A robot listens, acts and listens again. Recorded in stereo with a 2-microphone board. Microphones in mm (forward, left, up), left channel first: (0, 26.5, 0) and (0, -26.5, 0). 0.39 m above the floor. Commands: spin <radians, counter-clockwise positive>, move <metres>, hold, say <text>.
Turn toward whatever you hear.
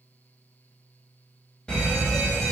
spin 0.35
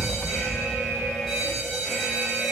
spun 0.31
say Facing the fire alarm, 2 to 4 m away.